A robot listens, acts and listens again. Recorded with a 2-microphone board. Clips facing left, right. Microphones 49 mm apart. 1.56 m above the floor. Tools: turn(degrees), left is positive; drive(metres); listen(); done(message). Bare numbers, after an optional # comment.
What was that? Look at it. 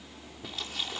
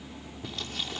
turn(30)
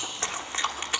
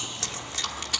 # So it is at 150° left.
turn(150)
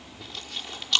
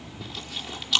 done("Found it: chewing, straight ahead.")